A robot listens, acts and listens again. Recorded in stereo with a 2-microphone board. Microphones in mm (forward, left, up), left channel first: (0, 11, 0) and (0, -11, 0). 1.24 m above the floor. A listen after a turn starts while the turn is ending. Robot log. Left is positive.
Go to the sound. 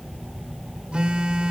note: The phone buzzing: about 50° right or 130° right.
cmd yaw -50
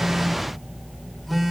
cmd fwd 1.0
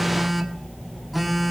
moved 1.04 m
cmd fwd 1.0
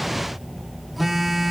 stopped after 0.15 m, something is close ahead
note: The phone buzzing is now 10° right.
cmd yaw -10
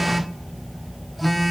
end: I am next to the phone buzzing.